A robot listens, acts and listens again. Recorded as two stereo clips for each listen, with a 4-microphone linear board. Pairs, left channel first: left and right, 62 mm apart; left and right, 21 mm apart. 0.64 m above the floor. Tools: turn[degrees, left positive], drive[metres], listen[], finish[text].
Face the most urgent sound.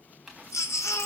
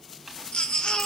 Thought: The baby crying: about 50° left or 130° left.
Action: turn[50]
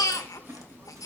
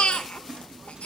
Thought: So it is at 75° left.
Action: turn[75]
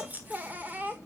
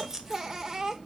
Thought: The baby crying is now 30° right.
Action: turn[-30]
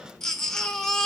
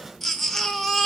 Thought: The baby crying is now 10° left.
Action: turn[10]
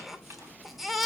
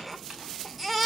Action: finish[Found it: a baby crying, straight ahead, 1 to 2 m away.]